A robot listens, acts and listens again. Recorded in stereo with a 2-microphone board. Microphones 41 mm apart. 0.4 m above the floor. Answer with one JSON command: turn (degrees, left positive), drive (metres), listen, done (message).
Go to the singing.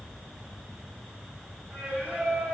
{"turn": -45}
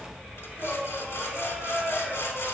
{"turn": -10}
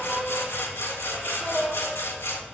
{"drive": 1.0}
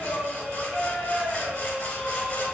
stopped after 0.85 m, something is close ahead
{"turn": 10}
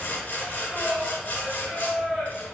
{"done": "I am next to the singing."}